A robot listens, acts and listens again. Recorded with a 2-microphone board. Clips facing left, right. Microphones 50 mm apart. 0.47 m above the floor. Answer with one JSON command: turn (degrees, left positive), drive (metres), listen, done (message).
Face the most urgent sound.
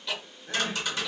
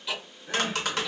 {"turn": -30}
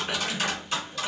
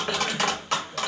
{"listen": true}
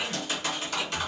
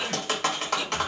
{"listen": true}
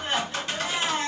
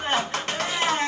{"turn": -130}
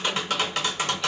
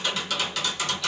{"listen": true}
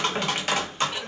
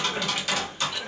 {"listen": true}
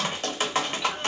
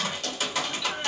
{"done": "Facing where the crying came from. I can't hear it now."}